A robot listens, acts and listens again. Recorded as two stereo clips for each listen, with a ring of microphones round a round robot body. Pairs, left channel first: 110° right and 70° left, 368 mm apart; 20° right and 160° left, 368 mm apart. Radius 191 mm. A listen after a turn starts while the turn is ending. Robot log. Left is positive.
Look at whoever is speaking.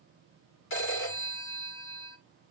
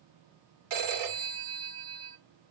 cmd idle
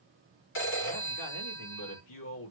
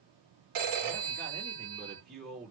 note: The man speaking: 140° right.
cmd yaw -140
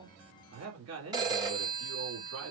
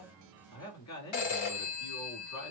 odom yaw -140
note: The man speaking is now 20° left.
cmd yaw +20
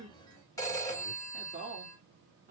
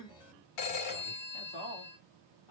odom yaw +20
end: Found it: a man speaking, straight ahead, 2 to 4 m away.